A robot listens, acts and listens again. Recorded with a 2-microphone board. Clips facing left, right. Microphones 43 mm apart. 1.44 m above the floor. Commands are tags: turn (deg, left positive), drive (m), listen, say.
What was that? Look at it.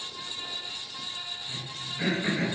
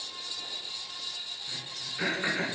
<turn deg="-50"/>
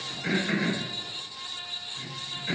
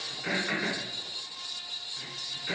<turn deg="-10"/>
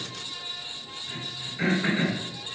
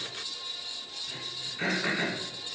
<say>Facing the throat clearing, 2 to 4 m away.</say>